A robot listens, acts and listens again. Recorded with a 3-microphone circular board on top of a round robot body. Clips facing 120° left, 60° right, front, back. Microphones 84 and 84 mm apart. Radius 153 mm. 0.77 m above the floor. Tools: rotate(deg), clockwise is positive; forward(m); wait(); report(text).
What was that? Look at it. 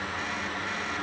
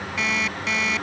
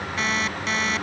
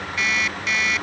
rotate(55)
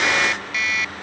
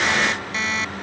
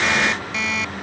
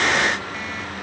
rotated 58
report("Found it: an alarm clock, straight ahead.")